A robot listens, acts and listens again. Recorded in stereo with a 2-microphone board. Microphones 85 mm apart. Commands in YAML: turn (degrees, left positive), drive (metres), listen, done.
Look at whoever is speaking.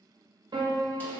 listen: true
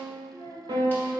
turn: 60
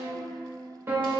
listen: true
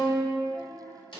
turn: 30
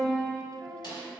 listen: true
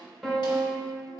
listen: true
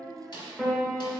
done: "Found it: a child speaking, straight ahead."